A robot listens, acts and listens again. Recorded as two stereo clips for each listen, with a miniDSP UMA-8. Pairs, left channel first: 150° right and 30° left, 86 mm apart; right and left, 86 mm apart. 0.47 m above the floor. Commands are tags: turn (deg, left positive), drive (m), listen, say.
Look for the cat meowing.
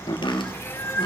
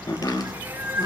<turn deg="150"/>
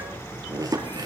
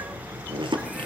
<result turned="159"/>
<turn deg="-10"/>
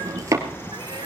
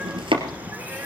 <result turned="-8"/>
<turn deg="20"/>
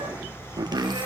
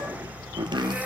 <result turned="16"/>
<turn deg="15"/>
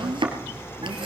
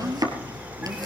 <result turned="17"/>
<listen/>
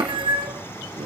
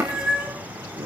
<turn deg="10"/>
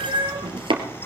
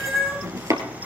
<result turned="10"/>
<say>Facing the cat meowing.</say>